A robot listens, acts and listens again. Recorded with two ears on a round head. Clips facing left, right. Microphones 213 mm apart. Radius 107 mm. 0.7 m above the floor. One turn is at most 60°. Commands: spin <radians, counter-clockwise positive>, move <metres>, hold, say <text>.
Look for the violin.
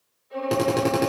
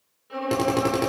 spin -1.05
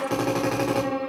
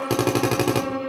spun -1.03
spin -0.44
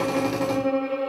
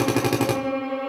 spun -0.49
say Found it: a violin, straight ahead, over 4 m away.